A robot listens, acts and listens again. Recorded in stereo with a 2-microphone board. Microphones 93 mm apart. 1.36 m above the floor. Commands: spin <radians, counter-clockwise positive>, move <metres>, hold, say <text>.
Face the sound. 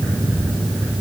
hold
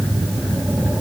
hold
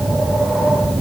say I can't make out anything to turn to.